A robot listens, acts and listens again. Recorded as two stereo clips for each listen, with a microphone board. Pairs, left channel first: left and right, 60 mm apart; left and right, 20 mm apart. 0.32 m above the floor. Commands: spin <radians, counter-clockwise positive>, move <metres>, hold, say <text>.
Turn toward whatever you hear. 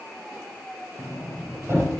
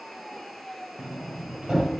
spin -0.79
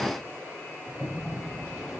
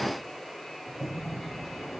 say Found it: a sliding door, straight ahead, over 4 m away.